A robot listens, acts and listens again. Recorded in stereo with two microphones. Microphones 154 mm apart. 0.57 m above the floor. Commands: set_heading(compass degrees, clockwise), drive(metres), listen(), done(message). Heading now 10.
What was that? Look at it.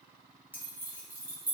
set_heading(40)
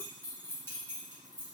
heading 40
set_heading(25)
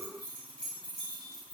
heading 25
done("Facing the keys jangling.")